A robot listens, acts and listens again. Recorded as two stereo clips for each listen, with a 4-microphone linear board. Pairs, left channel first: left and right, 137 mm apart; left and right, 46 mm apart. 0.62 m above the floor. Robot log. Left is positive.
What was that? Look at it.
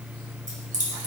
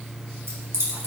note: The keys jangling: about 75° right or 105° right.
cmd yaw -75
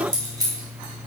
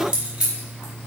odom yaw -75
note: So it is at 30° right.
cmd yaw -30
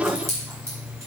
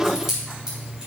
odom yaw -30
note: The keys jangling is now 20° right.
cmd yaw -20
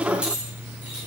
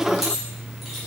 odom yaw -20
note: The keys jangling is now 10° right.
cmd yaw -10
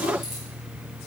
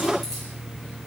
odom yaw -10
cmd idle
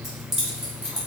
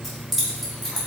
end: Facing the keys jangling.